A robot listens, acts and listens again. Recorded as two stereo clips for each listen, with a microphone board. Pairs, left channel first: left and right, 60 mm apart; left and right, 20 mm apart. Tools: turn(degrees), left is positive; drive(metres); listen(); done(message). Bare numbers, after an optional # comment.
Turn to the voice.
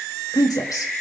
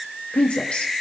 turn(90)
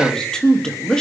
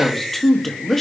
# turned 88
# So it is at 10° left.
turn(10)
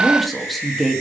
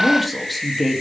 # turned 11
done("Found it: a woman speaking, straight ahead.")